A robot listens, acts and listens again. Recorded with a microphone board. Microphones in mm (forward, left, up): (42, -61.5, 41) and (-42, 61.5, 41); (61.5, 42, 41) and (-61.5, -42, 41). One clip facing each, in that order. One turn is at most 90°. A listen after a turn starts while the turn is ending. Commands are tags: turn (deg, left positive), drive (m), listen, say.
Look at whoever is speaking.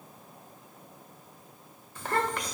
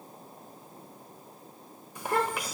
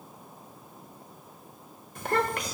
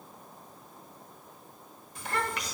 <turn deg="45"/>
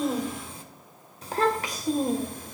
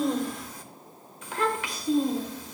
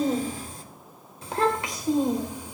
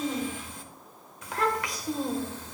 <turn deg="-40"/>
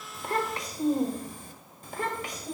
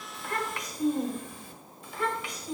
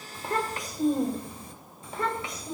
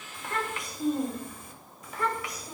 <turn deg="-25"/>
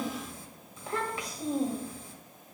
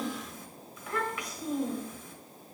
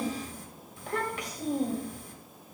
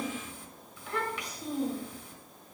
<say>Facing the child speaking.</say>